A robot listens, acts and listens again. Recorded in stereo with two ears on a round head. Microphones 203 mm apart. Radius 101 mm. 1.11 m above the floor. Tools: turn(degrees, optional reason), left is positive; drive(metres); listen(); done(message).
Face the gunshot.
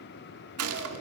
turn(degrees=-75, reason="The gunshot: about 75° right or 105° right.")
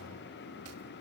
listen()
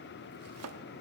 done("I heard a gunshot, but can't make it out now. It was about straight ahead or 30° right.")